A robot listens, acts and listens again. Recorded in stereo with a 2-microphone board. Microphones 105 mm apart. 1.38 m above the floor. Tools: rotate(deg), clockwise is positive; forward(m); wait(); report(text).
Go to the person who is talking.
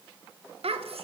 rotate(90)
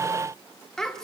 forward(1.0)
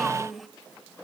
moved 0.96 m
forward(1.0)
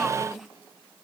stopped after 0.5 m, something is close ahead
report("I am next to the child speaking.")